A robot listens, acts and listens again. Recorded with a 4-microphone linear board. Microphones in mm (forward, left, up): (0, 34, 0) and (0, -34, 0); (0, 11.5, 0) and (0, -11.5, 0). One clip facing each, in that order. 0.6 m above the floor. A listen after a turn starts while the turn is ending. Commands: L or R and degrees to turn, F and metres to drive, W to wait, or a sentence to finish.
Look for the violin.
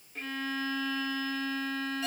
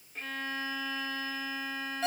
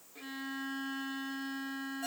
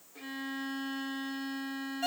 R30
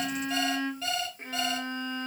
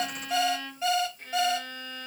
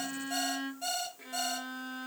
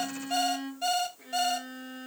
L25
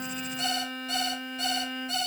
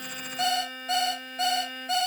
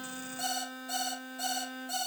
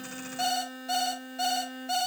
Found it: a violin, straight ahead.